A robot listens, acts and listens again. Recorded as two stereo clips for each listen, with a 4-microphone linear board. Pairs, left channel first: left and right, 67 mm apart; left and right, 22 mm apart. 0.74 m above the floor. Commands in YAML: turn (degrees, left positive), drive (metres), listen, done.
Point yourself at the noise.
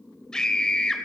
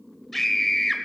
turn: 30
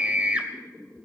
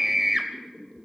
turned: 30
turn: -20
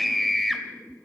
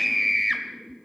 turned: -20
done: "Facing the scream, 2 to 4 m away."